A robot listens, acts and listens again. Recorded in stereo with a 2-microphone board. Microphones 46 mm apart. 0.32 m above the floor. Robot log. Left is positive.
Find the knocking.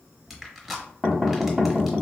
cmd yaw -30
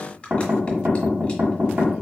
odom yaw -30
note: So it is at 130° right.
cmd yaw -130
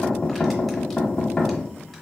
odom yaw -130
note: The knocking is now 20° left.
cmd yaw +20
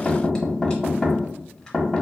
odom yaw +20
end: Facing the knocking.